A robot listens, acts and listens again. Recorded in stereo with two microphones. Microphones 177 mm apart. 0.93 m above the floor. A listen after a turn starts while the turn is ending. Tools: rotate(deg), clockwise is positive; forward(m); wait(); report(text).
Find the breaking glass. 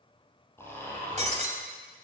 rotate(40)
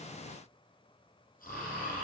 wait()
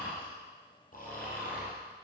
report("I heard breaking glass, but can't make it out now. It was about straight ahead or 100° right.")